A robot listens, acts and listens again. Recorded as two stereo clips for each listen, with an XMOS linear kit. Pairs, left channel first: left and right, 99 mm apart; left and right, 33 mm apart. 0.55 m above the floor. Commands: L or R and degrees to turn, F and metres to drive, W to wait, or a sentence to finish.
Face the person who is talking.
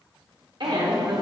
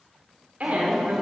R50
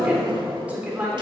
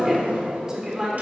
R15
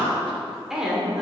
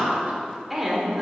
Found it: a woman speaking, straight ahead.